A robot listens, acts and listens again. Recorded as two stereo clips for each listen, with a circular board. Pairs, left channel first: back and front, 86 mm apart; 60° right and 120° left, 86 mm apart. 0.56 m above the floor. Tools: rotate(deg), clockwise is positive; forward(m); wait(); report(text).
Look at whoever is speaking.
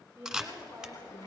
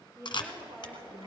rotate(-65)
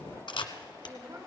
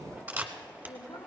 rotate(25)
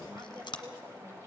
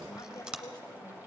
wait()
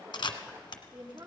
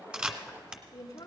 rotate(15)
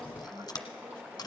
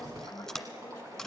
report("Facing the woman speaking.")